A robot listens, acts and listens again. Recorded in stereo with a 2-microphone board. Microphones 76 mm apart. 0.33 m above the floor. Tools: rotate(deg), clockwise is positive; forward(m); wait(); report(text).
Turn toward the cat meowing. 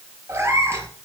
rotate(30)
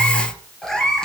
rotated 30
rotate(-10)
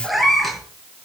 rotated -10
report("Found it: a cat meowing, straight ahead.")